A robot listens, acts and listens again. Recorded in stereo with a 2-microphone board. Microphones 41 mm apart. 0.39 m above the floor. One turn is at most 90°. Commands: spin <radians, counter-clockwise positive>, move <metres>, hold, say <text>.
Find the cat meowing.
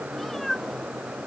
spin 0.52
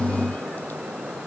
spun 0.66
hold
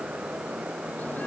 hold
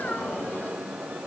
spin 1.57
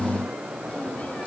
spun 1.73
spin 0.61
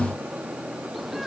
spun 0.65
say Facing the cat meowing.